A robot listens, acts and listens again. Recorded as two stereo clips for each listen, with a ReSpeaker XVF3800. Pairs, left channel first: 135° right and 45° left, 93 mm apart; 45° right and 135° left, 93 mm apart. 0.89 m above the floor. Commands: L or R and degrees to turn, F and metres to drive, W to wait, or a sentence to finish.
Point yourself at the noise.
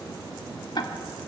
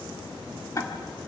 R100
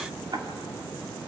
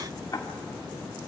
Facing the ticking, 1 to 2 m away.